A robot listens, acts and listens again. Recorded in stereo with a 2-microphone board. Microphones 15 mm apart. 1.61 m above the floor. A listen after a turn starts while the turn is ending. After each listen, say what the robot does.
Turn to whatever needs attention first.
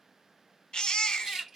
Turn 70° left.
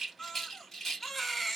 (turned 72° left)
Turn 15° left.
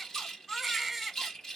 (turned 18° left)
Found it: a baby crying, straight ahead.